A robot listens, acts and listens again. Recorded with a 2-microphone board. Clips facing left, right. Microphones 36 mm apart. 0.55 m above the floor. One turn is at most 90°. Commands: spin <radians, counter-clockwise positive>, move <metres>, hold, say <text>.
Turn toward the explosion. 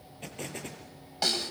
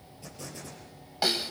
spin 1.13
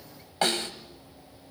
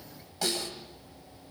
hold
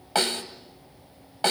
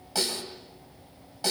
say I heard an explosion, but can't make it out now. It was about straight ahead or 50° left.